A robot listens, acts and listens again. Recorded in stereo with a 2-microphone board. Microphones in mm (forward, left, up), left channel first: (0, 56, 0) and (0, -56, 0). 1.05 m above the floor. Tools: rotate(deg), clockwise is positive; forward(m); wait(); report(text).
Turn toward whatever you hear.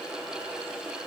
wait()
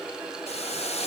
rotate(-70)
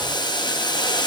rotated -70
rotate(-40)
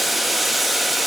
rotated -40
report("Found it: boiling, straight ahead.")